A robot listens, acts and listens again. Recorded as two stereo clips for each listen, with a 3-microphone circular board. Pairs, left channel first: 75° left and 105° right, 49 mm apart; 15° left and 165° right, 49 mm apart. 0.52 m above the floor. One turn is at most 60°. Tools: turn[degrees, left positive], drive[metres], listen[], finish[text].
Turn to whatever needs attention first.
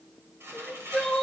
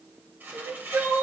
Thought: The crying: 155° left.
Action: turn[60]
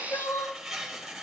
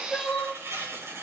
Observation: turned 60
Thought: The crying is now 95° left.
Action: turn[60]
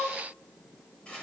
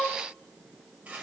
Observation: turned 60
Thought: The crying is now 55° left.
Action: turn[55]
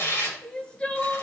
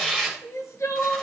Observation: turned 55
Action: finish[Found it: crying, straight ahead, 1 to 2 m away.]